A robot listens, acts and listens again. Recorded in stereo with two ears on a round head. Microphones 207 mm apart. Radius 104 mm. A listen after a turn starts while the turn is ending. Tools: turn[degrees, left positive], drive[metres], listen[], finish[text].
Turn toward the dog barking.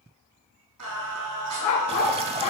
Action: turn[90]
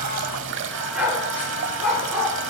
Action: finish[Facing the dog barking.]